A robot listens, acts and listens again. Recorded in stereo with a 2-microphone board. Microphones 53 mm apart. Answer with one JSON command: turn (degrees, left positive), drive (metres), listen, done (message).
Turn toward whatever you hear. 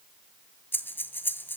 {"turn": 40}
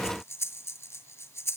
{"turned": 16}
{"turn": 125}
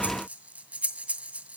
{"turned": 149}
{"turn": -30}
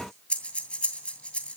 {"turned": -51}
{"turn": 25}
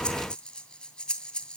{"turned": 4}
{"turn": 20}
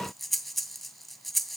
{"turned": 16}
{"done": "Found it: breathing, straight ahead, 2 to 4 m away."}